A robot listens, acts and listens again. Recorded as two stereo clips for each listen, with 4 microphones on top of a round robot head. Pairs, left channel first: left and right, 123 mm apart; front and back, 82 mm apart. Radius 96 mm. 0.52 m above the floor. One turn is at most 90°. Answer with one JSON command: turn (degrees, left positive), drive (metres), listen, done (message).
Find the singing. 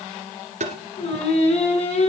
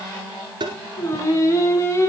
{"turn": 60}
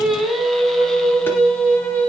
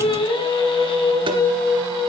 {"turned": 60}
{"turn": 10}
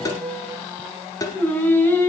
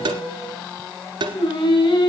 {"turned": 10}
{"turn": 20}
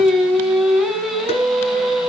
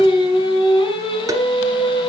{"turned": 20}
{"done": "Found it: singing, straight ahead."}